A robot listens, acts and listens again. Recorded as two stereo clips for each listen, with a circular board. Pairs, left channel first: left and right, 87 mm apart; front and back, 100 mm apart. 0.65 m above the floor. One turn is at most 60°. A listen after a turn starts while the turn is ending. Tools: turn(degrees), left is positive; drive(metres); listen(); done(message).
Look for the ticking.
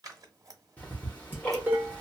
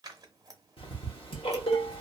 turn(degrees=20)
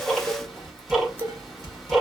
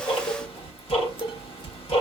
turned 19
done("Facing the ticking, 1 to 2 m away.")